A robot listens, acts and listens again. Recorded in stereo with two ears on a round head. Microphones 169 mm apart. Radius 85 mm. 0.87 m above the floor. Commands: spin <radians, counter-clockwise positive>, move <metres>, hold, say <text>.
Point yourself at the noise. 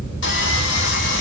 spin 1.13
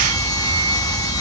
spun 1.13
spin 0.35
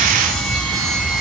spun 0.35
say Facing the sawing, 1 to 2 m away.